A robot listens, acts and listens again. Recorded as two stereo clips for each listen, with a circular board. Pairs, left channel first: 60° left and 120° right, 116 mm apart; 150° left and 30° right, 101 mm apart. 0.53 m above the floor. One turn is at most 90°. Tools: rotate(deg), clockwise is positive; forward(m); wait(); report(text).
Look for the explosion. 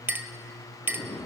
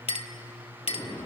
rotate(-90)
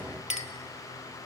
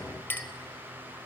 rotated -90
rotate(-35)
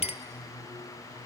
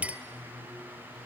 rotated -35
report("Facing where the explosion came from. I can't hear it now.")